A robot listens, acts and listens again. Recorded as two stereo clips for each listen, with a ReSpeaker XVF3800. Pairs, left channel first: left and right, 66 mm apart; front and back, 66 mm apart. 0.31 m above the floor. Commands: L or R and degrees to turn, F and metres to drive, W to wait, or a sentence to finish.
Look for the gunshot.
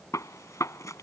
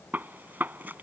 L120
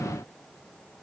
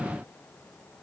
I heard a gunshot from this way, but can't make it out now.